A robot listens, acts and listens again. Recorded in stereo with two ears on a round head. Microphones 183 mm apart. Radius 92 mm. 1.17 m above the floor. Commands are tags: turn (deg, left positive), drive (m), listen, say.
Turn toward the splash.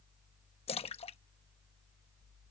<turn deg="30"/>
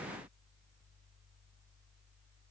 <listen/>
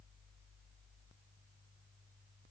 <say>I heard a splash, but can't make it out now. It was about straight ahead or 120° left.</say>